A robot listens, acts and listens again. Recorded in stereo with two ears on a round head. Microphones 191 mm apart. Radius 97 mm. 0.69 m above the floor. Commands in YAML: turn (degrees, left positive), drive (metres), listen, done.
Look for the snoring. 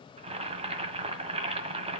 listen: true
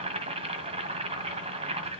listen: true
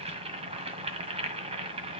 done: "I can't make out snoring to turn to."